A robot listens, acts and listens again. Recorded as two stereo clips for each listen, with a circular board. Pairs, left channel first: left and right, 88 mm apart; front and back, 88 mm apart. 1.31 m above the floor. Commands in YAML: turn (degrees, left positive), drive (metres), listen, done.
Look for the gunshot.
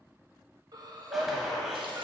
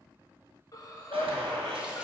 turn: -175
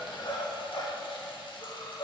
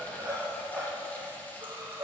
done: "Facing where the gunshot came from. I can't hear it now."